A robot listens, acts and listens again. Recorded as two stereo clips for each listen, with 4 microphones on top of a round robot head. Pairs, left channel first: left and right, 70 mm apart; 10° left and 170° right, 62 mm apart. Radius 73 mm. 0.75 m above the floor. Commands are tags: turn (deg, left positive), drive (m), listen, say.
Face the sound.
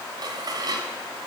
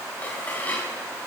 <turn deg="-60"/>
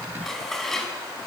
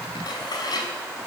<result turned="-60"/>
<say>Facing the dishes clattering.</say>